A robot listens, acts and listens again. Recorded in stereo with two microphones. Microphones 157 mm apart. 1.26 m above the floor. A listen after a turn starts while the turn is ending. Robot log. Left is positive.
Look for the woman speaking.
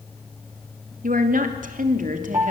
note: The woman speaking: about 55° right or 125° right.
cmd yaw -55
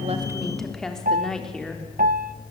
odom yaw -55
end: Found it: a woman speaking, straight ahead.